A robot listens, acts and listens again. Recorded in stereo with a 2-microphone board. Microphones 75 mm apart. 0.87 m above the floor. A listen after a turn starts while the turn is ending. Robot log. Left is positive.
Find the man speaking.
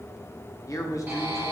note: The man speaking: about 45° left or 135° left.
cmd yaw +45
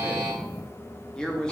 note: So it is at 10° left.
cmd yaw +10
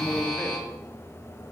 cmd idle
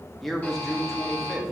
end: Facing the man speaking, 1 to 2 m away.